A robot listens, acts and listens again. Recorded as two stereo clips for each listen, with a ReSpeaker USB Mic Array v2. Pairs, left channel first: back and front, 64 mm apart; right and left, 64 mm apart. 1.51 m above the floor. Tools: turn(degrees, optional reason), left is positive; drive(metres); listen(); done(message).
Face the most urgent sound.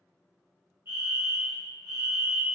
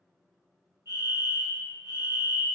turn(degrees=50, reason="The fire alarm: 50° left.")
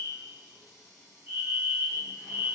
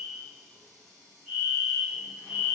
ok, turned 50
turn(degrees=10, reason="The fire alarm is now 10° left.")
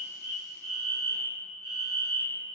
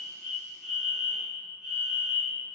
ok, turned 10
done("Found it: a fire alarm, straight ahead, 1 to 2 m away.")